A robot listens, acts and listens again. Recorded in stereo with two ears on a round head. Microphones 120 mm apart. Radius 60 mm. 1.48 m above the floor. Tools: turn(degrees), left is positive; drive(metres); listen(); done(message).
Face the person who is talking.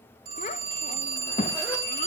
turn(degrees=55)
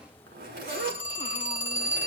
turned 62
listen()
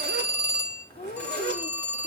turn(degrees=50)
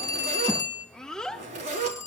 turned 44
done("Found it: a child speaking, straight ahead.")